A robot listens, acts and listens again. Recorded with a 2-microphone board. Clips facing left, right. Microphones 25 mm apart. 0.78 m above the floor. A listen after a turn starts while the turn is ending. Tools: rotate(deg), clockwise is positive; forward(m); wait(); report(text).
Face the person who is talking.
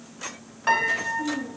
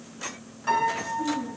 rotate(30)
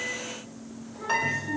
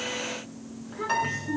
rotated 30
rotate(145)
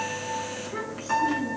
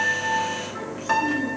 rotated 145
wait()
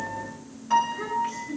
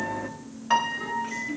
report("Facing the child speaking.")